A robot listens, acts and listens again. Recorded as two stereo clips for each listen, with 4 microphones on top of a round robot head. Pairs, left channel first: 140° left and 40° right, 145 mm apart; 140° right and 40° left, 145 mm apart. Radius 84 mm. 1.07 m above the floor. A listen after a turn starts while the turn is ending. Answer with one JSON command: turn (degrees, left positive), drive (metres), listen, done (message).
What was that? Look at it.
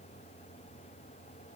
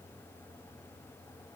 {"listen": true}
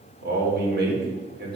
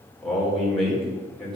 {"turn": -50}
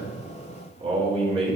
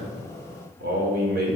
{"turn": 15}
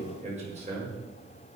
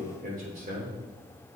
{"done": "Found it: a man speaking, straight ahead."}